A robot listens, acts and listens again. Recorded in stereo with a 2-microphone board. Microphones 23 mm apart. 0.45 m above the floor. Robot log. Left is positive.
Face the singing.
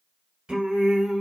note: The singing: about 50° right or 130° right.
cmd yaw -50
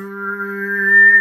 note: So it is at 15° right.
cmd yaw -15
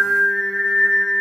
note: The singing is now 25° left.
cmd yaw +25
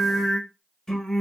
note: The singing is now 25° left.
cmd yaw +25
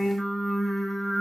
end: Found it: singing, straight ahead.